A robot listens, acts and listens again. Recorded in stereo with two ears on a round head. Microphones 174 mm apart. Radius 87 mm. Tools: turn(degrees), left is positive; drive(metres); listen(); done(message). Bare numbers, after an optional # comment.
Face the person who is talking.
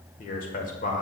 # The man speaking: about 45° left or 135° left.
turn(45)
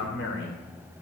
# So it is at 85° left.
turn(85)
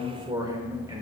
# The man speaking is now 20° right.
turn(-20)
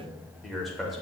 done("Facing the man speaking.")